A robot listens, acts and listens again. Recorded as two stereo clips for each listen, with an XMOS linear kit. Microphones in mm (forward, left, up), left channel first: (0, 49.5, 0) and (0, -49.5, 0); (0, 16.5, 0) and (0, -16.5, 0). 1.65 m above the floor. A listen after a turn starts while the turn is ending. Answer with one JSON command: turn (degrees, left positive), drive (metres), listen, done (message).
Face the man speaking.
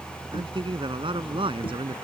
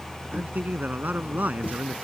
{"turn": -60}
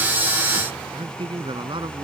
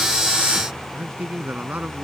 {"turn": -55}
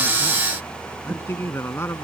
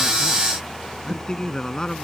{"turn": 25}
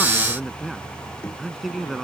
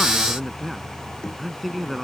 {"done": "Facing the man speaking."}